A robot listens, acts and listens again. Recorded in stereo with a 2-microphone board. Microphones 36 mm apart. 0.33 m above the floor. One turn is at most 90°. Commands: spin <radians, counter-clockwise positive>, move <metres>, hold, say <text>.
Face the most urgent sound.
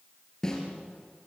hold
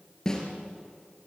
hold
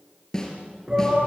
spin -0.52
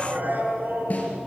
spin -1.57
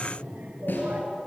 spin -0.96
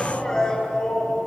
spin 0.35
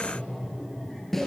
say Facing the shout.